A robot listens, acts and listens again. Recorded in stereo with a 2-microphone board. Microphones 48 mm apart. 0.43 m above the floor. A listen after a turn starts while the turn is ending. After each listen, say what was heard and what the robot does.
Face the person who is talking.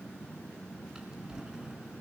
Keep listening.
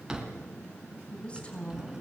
The woman speaking: about 25° left or 155° left. Turn 25° left.
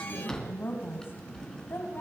So it is at 130° left. Turn 130° left.
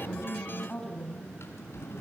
The woman speaking is now 20° left. Turn 20° left.
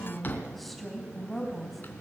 Found it: a woman speaking, straight ahead.